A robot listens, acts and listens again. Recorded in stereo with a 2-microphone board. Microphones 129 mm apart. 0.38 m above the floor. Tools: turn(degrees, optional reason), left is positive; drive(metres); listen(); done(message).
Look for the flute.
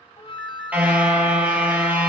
turn(degrees=45, reason="The flute: about 45° left or 135° left.")
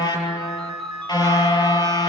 listen()
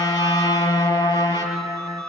listen()
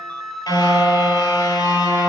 done("Found it: a flute, straight ahead.")